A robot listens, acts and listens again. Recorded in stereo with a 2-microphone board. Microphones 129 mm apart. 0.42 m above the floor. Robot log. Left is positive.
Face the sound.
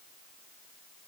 cmd idle
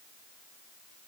cmd idle
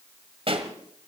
note: The pop: about 45° right or 135° right.
cmd yaw -45
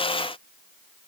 cmd idle
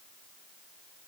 end: I heard a pop, but can't make it out now. It was about straight ahead or 90° right.